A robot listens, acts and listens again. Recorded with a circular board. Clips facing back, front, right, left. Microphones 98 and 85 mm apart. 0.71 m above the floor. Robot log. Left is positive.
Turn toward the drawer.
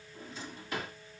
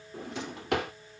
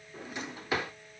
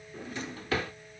note: The drawer: 20° right.
cmd yaw -20
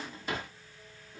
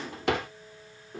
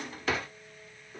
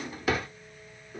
end: Found it: a drawer, straight ahead, under 1 m away.